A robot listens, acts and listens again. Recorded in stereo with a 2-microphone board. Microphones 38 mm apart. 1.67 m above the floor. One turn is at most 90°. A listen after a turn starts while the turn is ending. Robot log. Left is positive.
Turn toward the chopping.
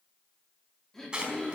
note: The chopping: about 20° right or 160° right.
cmd yaw -20
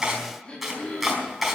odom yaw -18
end: Facing the chopping.